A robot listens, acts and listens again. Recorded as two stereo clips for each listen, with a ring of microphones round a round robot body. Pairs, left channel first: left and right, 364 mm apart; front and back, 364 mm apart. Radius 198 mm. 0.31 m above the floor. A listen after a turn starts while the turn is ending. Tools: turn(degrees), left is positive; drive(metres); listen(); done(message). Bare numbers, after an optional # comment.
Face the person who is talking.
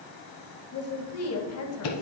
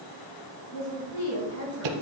# The woman speaking: 50° left.
turn(50)
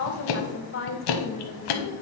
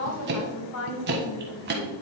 # The woman speaking is now 40° left.
turn(40)
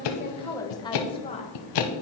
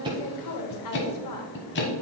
# The woman speaking is now 20° left.
turn(20)
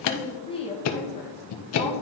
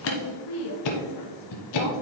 # The woman speaking is now 20° left.
turn(20)
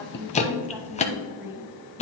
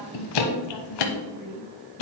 done("Facing the woman speaking.")